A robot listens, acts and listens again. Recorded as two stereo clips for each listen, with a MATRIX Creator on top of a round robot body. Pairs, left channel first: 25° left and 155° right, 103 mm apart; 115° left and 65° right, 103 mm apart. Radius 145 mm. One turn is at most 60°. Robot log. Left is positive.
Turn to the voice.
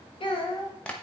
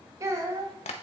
note: The child speaking: 10° right.
cmd yaw -10
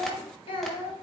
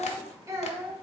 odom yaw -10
end: Found it: a child speaking, straight ahead.